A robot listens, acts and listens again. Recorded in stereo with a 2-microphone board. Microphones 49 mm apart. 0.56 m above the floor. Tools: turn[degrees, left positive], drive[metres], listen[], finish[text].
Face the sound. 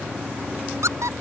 Action: turn[-90]
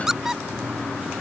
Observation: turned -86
Thought: So it is at 10° right.
Action: turn[-10]
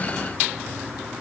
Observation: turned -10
Action: listen[]
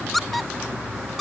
Action: finish[Found it: a squeak, straight ahead.]